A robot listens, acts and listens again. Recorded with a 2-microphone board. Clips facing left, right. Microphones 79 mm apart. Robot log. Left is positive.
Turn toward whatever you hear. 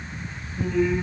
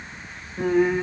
note: The singing: about 55° right or 125° right.
cmd yaw -55
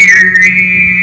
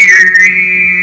note: So it is at 15° right.
cmd yaw -15
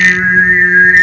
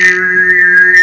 note: The singing is now 15° right.
cmd yaw -15
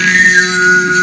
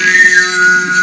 note: The singing is now 15° right.
cmd yaw -15
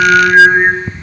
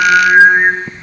end: Facing the singing, 2 to 4 m away.